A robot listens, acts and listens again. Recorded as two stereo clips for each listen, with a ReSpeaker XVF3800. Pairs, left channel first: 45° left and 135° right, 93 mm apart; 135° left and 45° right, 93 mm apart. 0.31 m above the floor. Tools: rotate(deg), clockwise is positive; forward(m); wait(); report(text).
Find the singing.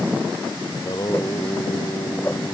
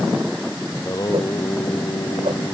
rotate(-85)
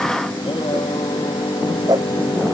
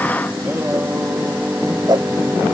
rotate(-25)
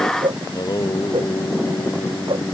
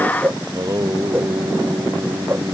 report("Facing the singing.")